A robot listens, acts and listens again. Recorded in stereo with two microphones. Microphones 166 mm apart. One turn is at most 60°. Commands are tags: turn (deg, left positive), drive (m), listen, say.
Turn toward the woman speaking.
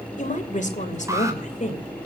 <turn deg="45"/>
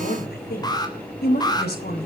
<turn deg="60"/>
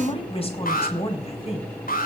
<turn deg="35"/>
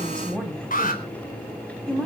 <say>Facing the woman speaking, over 4 m away.</say>